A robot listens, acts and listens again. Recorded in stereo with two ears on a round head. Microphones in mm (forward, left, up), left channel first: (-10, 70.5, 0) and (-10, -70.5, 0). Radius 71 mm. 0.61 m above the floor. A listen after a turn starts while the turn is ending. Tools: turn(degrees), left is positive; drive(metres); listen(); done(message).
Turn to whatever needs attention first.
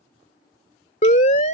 turn(degrees=50)
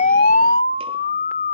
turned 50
turn(degrees=70)
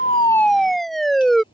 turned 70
done("Facing the siren.")